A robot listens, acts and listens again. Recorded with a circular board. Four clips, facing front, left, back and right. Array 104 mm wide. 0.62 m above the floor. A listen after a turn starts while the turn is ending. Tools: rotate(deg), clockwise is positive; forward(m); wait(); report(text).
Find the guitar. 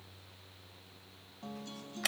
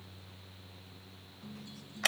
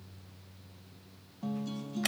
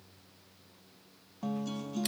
rotate(95)
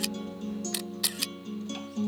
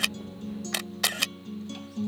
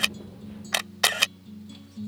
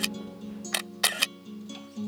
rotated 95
report("Facing the guitar.")